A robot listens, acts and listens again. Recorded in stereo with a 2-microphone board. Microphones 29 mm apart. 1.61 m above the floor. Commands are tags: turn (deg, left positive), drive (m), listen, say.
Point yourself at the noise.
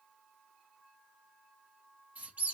<turn deg="-60"/>
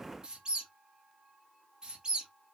<turn deg="-35"/>
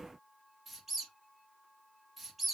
<say>Facing the squeak.</say>